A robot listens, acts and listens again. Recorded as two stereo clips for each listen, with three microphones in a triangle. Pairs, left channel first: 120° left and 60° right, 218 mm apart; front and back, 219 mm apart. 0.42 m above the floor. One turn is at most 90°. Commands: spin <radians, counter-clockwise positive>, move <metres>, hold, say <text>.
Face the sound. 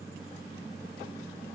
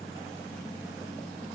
hold
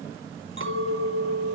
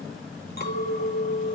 spin -0.79
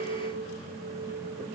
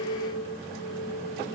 spin -0.26
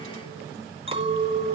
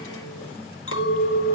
say Facing the clink, 2 to 4 m away.